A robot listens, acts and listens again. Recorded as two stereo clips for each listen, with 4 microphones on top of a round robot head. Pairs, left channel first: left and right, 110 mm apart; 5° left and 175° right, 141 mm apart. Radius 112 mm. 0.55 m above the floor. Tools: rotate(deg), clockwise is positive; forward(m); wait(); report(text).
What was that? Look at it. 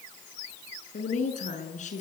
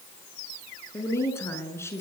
rotate(-75)
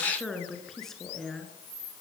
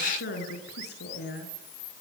report("Found it: a woman speaking, straight ahead, over 4 m away.")